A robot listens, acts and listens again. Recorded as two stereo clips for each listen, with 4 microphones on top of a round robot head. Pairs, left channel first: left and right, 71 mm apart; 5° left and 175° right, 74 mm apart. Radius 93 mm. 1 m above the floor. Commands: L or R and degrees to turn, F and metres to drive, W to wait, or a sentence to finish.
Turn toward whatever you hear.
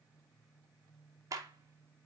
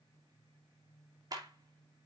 R135
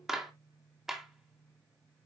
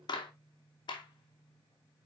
Found it: a clap, straight ahead, 2 to 4 m away.